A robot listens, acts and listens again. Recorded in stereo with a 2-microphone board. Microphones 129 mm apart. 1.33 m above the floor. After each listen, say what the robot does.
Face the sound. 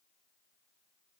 Keep listening.
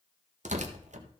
Turn 70° right.
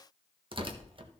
Turn 45° right.
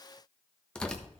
Found it: tearing paper, straight ahead.